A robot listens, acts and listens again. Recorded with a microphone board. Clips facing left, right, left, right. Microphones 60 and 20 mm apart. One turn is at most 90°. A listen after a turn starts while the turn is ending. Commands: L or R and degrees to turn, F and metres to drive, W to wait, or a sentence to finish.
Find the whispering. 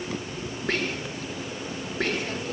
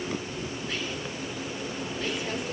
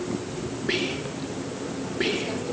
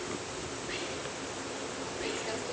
L65
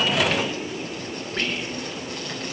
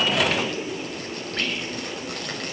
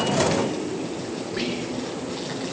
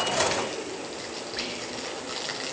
Found it: whispering, straight ahead.